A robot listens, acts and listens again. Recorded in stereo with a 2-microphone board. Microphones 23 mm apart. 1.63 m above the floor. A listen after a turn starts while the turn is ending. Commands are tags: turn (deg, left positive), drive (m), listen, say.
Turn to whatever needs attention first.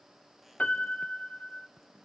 <listen/>
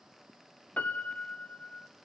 <listen/>
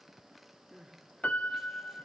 <turn deg="-30"/>
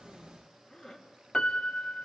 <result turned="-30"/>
<turn deg="25"/>
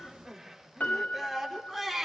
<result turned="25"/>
<say>Facing the crying.</say>